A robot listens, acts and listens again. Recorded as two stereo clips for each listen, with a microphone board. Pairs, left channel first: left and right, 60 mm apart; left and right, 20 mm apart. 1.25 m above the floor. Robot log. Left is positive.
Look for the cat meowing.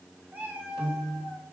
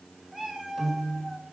note: The cat meowing: about 25° right or 155° right.
cmd yaw -25
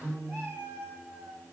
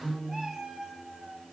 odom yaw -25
note: The cat meowing: about 40° right or 140° right.
cmd yaw -40
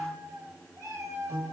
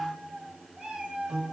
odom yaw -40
note: So it is at 110° right.
cmd yaw -110
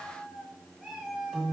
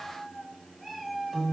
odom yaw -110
end: Facing the cat meowing.